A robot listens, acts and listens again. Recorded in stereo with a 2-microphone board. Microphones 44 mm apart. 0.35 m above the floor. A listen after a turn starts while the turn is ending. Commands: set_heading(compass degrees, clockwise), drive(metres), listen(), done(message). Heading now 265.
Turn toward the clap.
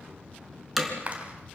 set_heading(295)
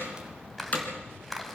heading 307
done("Facing the clap, 2 to 4 m away.")